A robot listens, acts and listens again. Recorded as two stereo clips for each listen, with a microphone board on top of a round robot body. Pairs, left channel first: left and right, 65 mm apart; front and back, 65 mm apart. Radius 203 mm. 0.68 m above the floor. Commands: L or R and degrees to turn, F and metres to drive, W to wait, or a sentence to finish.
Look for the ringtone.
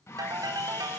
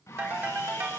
R120
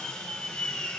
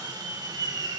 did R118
W
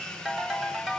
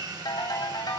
Found it: a ringtone, straight ahead.